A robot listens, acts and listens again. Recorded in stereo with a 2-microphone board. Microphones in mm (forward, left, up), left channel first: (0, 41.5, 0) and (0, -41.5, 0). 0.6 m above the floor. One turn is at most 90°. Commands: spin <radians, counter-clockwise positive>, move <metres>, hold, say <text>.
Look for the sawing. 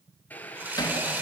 spin -0.44
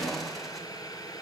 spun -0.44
hold
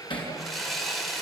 say Found it: sawing, straight ahead.